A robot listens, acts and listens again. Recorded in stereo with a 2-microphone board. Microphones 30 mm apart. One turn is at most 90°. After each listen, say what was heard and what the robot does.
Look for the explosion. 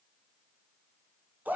Keep listening.
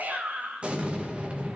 The explosion: about 40° right or 140° right. Turn 40° right.
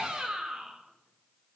Keep listening.
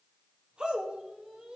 I heard an explosion, but can't make it out now. It was about straight ahead or 100° right.